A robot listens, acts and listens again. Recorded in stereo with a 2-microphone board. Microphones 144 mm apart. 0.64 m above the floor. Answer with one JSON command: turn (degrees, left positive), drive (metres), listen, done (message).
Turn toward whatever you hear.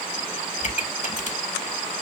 {"turn": 55}
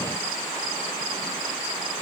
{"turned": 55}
{"listen": true}
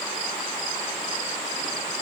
{"done": "I heard a pop, but can't make it out now. It was about straight ahead or 70° left."}